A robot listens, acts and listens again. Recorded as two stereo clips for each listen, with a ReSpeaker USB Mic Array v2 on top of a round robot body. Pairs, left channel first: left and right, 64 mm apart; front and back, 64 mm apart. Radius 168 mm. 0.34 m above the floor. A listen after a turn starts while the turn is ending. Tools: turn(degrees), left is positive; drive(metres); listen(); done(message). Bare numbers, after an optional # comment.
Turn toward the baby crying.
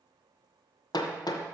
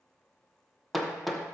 listen()
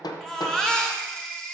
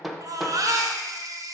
# The baby crying: 170° left.
turn(170)
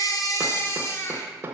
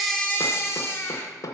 # The baby crying is now 45° left.
turn(45)
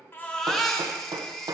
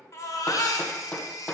done("Facing the baby crying, 1 to 2 m away.")